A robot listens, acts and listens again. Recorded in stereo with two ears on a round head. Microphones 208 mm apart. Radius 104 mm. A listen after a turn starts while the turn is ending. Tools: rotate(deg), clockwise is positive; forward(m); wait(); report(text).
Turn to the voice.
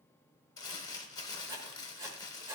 wait()
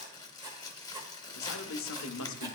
rotate(-60)
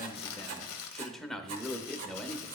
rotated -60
report("Found it: a man speaking, straight ahead.")